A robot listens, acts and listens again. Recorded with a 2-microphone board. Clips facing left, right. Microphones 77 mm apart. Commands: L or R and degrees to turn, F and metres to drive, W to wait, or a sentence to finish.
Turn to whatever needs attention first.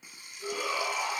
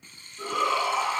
R90
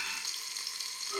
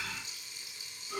Found it: a shout, straight ahead.